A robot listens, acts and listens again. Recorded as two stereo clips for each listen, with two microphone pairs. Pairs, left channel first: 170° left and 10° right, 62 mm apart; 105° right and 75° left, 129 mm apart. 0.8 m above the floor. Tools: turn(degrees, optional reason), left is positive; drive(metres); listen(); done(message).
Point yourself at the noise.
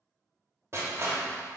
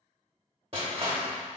turn(degrees=30, reason="The crushing: 30° left.")
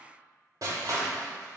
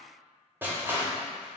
done("Facing the crushing, 1 to 2 m away.")